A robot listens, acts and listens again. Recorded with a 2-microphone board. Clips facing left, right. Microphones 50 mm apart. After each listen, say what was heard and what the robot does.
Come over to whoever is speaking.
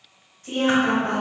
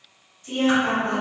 The woman speaking: about 55° left or 125° left. Turn 55° left.
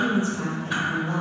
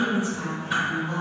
So it is at 50° left. Turn 50° left.
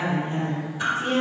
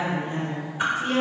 The woman speaking is now 20° left. Turn 20° left.
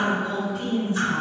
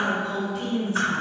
Drive 1.0 m forward.
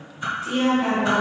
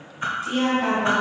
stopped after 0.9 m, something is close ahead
I am next to the woman speaking.